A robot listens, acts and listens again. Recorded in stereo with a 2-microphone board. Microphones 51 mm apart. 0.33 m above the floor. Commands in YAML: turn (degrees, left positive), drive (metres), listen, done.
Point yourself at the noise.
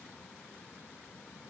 listen: true
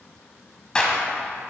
turn: 20
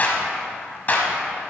turn: 140
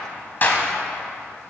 turn: 45
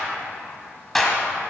done: "Found it: a clap, straight ahead, 1 to 2 m away."